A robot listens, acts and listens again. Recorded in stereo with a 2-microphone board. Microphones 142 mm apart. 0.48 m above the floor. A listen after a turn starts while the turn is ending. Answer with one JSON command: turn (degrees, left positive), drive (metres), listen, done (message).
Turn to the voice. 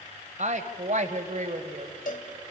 {"turn": -60}
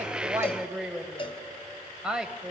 {"done": "Found it: a woman speaking, straight ahead, 1 to 2 m away."}